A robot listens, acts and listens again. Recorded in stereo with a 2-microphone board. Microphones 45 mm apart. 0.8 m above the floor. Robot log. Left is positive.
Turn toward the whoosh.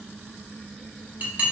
cmd idle
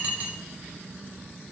cmd idle
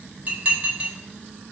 end: I can't make out a whoosh, only dishes clattering.